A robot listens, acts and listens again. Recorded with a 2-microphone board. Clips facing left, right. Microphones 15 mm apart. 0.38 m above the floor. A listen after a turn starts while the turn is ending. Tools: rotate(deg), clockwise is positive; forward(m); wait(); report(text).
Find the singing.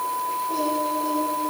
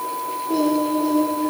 rotate(90)
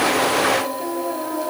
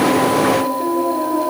report("Found it: singing, straight ahead.")